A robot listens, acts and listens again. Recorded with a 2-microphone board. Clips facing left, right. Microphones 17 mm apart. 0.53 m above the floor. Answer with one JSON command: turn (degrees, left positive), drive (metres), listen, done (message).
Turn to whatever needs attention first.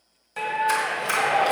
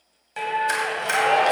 {"turn": -65}
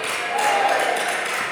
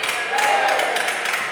{"turn": -25}
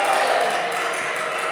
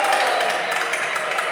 {"turn": -10}
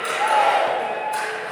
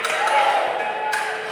{"done": "Facing the shout, 1 to 2 m away."}